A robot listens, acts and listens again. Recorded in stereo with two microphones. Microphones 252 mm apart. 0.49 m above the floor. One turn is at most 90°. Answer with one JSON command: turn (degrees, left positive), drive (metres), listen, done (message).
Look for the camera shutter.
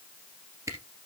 {"turn": -30}
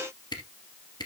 {"turn": 15}
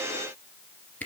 {"done": "Found it: a camera shutter, straight ahead."}